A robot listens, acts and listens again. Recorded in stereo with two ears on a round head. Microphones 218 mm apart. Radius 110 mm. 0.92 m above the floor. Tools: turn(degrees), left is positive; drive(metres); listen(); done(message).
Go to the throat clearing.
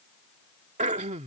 turn(degrees=-30)
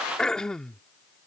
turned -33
drive(metres=1.0)
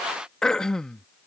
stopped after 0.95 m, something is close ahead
done("Arrived at the throat clearing, straight ahead.")